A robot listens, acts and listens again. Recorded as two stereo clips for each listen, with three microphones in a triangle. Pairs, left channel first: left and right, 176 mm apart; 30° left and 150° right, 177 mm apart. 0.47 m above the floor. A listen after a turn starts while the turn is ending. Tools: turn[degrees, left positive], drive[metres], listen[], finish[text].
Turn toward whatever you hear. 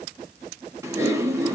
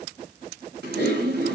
Thought: The typing on a keyboard: 165° right.
Action: turn[-165]
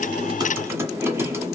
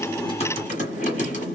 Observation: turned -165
Thought: The typing on a keyboard is now 15° right.
Action: turn[-15]
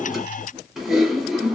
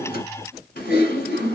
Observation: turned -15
Action: finish[Found it: typing on a keyboard, straight ahead.]